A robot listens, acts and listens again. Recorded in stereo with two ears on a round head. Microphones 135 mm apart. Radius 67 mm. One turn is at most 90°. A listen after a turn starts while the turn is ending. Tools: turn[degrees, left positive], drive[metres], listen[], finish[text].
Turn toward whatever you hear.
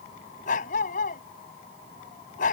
Thought: The dog barking: about 55° left or 125° left.
Action: turn[55]
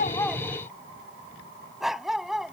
Action: finish[Facing the dog barking.]